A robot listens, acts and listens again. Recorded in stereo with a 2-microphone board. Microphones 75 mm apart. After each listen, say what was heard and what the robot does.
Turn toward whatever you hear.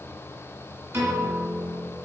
The piano: about 35° right or 145° right. Turn 35° right.
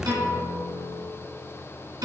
So it is at 110° right. Turn 110° right.
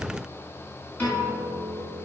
The piano is now 25° left. Turn 25° left.
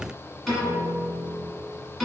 Found it: a piano, straight ahead.